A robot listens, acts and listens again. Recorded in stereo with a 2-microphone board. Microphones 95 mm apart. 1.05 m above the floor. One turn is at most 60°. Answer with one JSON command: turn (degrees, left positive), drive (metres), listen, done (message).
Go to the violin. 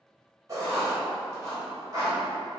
{"listen": true}
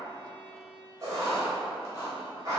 {"turn": 30}
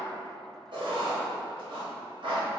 {"listen": true}
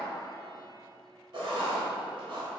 {"listen": true}
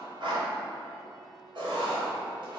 {"done": "I heard a violin, but can't make it out now. It was about straight ahead or 120° left. I did not reach it."}